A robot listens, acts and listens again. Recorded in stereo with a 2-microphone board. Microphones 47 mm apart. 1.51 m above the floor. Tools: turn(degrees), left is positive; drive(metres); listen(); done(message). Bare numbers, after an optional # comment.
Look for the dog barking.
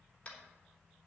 listen()
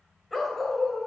turn(30)
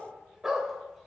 # So it is at 10° right.
turn(-10)
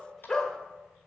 # The dog barking is now 15° left.
turn(15)
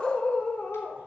# The dog barking is now 30° left.
turn(30)
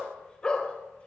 # The dog barking is now 20° left.
turn(20)
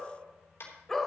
# The dog barking is now 10° left.
turn(10)
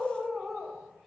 done("Facing the dog barking, 1 to 2 m away.")